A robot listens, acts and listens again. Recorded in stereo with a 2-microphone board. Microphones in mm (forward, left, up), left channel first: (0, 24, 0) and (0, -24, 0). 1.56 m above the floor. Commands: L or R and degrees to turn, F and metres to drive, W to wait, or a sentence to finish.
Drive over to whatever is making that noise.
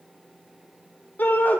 L45
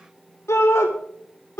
L90
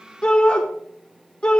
L20
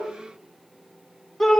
F1.0
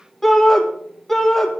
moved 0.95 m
F1.0
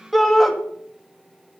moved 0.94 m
F1.0
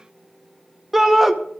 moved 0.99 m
F1.0
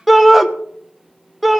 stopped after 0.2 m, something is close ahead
I am next to the shout.